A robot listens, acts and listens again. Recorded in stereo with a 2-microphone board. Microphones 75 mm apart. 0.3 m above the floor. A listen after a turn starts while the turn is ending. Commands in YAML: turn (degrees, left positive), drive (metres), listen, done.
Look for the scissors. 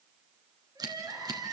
turn: -60
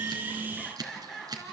turn: -60
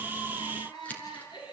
turn: 20
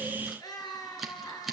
done: "Facing the scissors, 2 to 4 m away."